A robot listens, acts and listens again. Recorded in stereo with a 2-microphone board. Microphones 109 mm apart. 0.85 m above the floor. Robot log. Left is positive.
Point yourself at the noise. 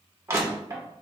note: The crushing: about 25° right or 155° right.
cmd yaw -25
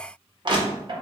note: So it is at 125° right.
cmd yaw -125
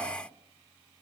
cmd idle
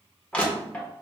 note: The crushing is now 15° left.
cmd yaw +15
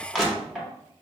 end: Facing the crushing.